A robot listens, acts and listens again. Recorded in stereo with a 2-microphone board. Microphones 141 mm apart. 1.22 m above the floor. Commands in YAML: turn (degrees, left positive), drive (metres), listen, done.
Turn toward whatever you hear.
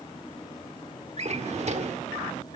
turn: -50
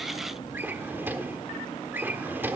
turn: -15
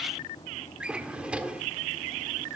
turn: -10
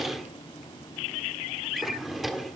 done: "Found it: a drawer, straight ahead."